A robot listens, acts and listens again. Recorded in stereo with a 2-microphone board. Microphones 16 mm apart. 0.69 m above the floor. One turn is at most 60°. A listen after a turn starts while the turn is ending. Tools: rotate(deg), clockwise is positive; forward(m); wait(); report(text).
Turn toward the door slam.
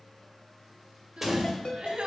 rotate(30)
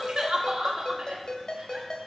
wait()
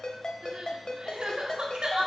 report("I heard a door slam, but can't make it out now. It was about 20° left or 140° right.")